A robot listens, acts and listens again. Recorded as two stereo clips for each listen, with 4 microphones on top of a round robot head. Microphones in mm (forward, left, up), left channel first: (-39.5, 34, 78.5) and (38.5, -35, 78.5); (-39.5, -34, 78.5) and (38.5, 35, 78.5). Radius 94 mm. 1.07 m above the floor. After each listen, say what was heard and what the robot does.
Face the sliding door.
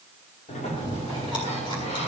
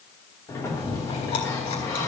The sliding door: 160° left. Turn 160° left.
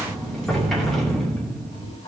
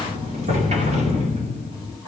The sliding door is now 55° left. Turn 55° left.
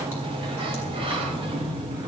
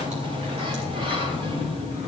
Found it: a sliding door, straight ahead.